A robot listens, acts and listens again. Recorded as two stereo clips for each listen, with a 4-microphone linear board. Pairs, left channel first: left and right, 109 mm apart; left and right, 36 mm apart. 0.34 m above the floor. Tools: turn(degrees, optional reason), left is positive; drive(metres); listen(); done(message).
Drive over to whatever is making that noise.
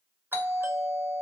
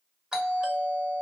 turn(degrees=-20, reason="The doorbell: about 20° right or 160° right.")
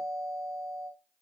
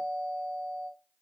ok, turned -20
turn(degrees=-140, reason="So it is at 140° right.")
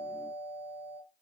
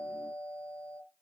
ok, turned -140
turn(degrees=30, reason="The doorbell is now 30° left.")
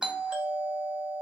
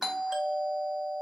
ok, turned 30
turn(degrees=-10, reason="The doorbell is now 10° right.")
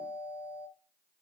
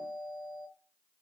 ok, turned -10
drive(metres=1.0)
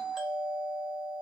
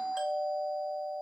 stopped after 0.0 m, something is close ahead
done("Blocked. The doorbell is further on, straight ahead.")